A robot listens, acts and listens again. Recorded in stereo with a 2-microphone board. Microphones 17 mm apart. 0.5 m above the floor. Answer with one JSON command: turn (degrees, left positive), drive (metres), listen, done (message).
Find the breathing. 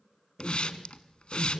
{"turn": -20}
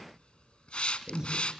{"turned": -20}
{"turn": -140}
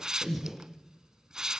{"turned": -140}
{"turn": -10}
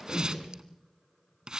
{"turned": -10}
{"done": "Facing the breathing."}